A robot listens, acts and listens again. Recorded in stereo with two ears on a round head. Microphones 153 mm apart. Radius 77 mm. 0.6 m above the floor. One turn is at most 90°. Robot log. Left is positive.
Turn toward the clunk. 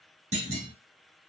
note: The clunk: about 40° right or 140° right.
cmd yaw -40
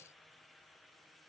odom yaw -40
cmd idle
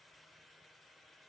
end: I heard a clunk, but can't make it out now. It was about straight ahead or 100° right.